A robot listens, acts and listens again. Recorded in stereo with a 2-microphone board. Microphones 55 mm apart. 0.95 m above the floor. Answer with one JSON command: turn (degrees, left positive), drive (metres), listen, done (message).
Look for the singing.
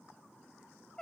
{"listen": true}
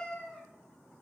{"listen": true}
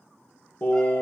{"turn": 45}
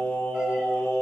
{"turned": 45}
{"turn": 70}
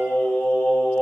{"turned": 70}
{"turn": 25}
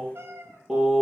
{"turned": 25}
{"done": "Found it: singing, straight ahead, 2 to 4 m away."}